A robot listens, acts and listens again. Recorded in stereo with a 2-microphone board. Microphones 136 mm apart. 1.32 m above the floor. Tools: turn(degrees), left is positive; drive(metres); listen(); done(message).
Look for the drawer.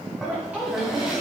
turn(degrees=-30)
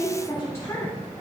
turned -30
listen()
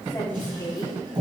turn(degrees=-145)
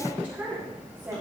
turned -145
listen()
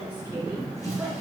turn(degrees=25)
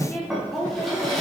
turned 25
done("Found it: a drawer, straight ahead.")